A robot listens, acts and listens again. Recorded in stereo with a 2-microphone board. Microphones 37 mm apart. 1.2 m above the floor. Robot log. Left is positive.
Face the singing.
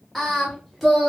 cmd yaw -30
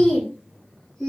note: So it is at 10° left.
cmd yaw +10
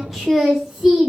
note: The singing is now 15° right.
cmd yaw -15
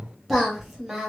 note: The singing is now 10° right.
cmd yaw -10
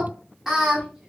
note: The singing is now 10° right.
cmd yaw -10
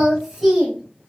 end: Found it: singing, straight ahead.